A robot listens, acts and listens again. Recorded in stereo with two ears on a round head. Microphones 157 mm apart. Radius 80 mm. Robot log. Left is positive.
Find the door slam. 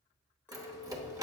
note: The door slam: about 20° right or 160° right.
cmd yaw -20
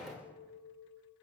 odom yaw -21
end: Found it: a door slam, straight ahead.